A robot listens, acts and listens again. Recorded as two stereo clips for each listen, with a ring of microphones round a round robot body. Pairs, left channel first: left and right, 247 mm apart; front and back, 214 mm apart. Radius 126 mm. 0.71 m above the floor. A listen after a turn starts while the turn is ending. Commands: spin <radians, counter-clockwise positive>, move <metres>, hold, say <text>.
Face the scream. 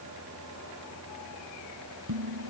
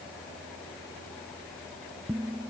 hold
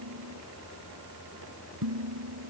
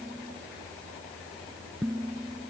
hold
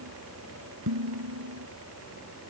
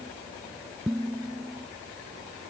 say I can't make out a scream, only dishes clattering.